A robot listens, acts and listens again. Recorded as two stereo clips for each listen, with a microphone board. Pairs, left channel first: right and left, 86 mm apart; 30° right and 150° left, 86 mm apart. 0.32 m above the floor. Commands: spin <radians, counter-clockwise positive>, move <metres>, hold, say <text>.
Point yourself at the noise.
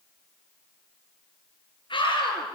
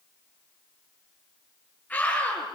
spin -1.75
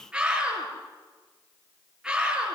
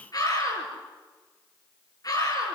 spin 0.17
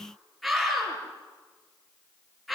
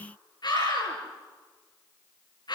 say Found it: a scream, straight ahead, over 4 m away.